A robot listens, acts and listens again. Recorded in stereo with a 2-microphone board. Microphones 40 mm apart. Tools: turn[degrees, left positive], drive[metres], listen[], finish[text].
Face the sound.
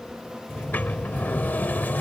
Thought: The sliding door: about 50° left or 130° left.
Action: turn[50]
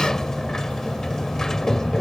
Thought: So it is at 15° left.
Action: turn[15]
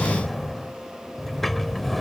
Action: finish[Found it: a sliding door, straight ahead.]